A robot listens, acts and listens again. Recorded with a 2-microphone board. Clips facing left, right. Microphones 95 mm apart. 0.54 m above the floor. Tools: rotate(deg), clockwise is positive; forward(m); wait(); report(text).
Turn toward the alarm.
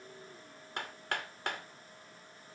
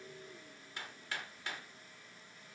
wait()
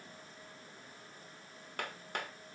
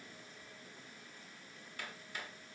wait()
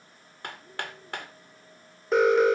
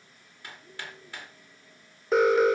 rotate(-30)
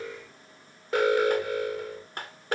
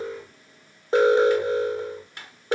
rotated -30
rotate(30)
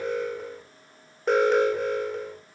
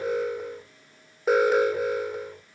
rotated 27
report("Facing the alarm, 1 to 2 m away.")